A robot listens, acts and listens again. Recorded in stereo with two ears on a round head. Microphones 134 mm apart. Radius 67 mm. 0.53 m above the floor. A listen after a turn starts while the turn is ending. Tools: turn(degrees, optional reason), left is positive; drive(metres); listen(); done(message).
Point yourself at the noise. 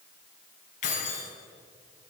turn(degrees=55, reason="The keys jangling: about 55° left or 125° left.")
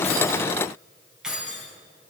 done("Found it: keys jangling, straight ahead.")